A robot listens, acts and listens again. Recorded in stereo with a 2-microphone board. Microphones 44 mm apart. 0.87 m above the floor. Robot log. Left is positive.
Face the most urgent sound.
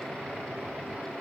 cmd idle
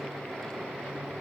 cmd idle
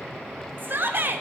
note: The shout: about 50° right or 130° right.
cmd yaw -50
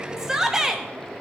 note: So it is at 10° right.
cmd yaw -10
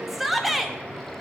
end: Facing the shout.